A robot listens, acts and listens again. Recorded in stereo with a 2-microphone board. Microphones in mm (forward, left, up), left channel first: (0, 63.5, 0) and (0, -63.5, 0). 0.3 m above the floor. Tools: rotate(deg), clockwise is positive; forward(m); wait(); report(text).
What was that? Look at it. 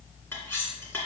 rotate(-15)
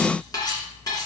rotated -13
rotate(-150)
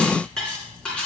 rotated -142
report("Found it: cutlery clinking, straight ahead, 2 to 4 m away.")